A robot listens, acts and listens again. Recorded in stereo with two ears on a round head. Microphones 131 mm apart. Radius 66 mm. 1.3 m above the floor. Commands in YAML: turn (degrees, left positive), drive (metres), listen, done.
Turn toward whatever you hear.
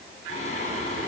turn: 55
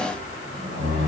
turn: 50
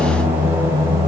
turn: -20
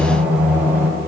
turn: -15
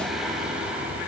turn: -10
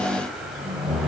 done: "Facing the singing, 2 to 4 m away."